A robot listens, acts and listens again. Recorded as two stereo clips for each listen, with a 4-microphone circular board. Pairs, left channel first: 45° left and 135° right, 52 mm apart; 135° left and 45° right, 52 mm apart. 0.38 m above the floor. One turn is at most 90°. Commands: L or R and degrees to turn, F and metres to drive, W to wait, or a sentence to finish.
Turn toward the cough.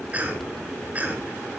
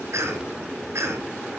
R75
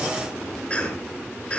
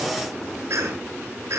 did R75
R25
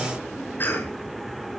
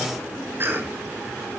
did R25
Found it: a cough, straight ahead, over 4 m away.